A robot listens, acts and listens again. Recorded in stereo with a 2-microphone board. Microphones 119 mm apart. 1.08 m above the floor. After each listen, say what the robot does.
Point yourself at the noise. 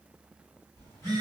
Turn 25° left.
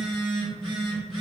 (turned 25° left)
Turn 130° left.
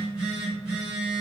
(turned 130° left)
Turn 10° right.
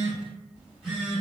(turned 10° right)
Found it: a phone buzzing, straight ahead.